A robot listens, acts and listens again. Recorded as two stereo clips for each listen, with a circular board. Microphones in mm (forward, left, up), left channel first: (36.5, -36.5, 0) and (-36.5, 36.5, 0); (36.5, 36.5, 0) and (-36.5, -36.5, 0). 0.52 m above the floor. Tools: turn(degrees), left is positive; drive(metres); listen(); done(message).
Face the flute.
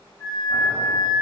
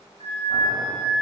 turn(degrees=-105)
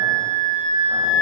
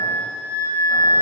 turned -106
done("Facing the flute.")